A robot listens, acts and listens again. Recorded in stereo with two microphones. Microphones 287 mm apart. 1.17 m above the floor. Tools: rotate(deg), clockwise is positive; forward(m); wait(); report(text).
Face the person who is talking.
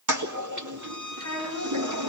rotate(-50)
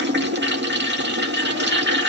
wait()
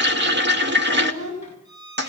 rotate(-65)
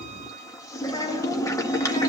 rotate(-15)
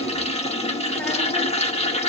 wait()
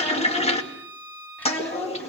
report("Facing the child speaking.")